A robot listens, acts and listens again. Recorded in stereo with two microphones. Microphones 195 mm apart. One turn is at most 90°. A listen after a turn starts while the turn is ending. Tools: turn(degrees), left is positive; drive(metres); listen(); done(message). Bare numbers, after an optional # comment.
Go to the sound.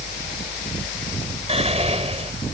# The whispering: about 35° right or 145° right.
turn(-35)
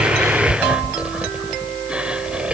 drive(1.0)
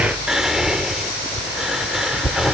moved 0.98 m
drive(1.0)
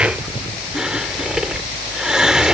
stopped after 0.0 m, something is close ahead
done("I am next to the whispering.")